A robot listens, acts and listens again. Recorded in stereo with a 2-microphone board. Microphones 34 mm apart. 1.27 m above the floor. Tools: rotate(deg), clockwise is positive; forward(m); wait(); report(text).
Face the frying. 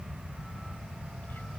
wait()
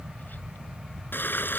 rotate(-90)
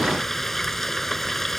report("Facing the frying.")